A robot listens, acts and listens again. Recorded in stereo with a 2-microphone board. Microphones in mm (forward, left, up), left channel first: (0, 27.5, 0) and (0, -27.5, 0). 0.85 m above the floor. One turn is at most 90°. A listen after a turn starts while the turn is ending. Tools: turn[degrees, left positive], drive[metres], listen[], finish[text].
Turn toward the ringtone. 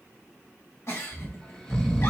Action: listen[]
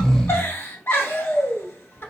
Action: listen[]
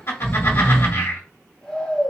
Action: finish[I can't make out a ringtone, only a giggle and snoring.]